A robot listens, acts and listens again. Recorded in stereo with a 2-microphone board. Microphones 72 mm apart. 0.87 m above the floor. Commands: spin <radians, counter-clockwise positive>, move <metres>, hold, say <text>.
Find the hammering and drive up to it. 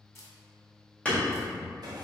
spin 0.26
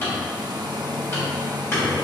spin 2.62
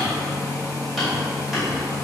move 1.0
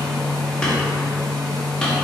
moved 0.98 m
hold
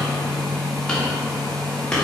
spin 0.17
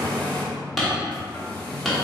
move 1.0
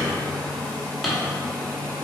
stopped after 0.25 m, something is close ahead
say I am next to the hammering.